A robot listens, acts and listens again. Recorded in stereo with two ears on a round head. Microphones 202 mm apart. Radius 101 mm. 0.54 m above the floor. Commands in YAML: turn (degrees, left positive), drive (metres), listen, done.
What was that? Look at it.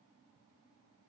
listen: true
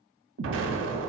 turn: -60
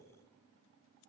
listen: true
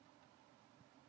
done: "I heard an explosion, but can't make it out now. It was about straight ahead or 60° right."